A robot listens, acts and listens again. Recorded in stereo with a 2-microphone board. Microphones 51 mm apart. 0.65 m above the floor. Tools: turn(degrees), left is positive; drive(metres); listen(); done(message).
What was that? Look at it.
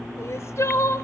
turn(degrees=60)
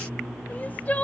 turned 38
turn(degrees=30)
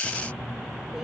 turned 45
turn(degrees=-15)
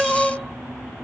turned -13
done("Facing the crying, under 1 m away.")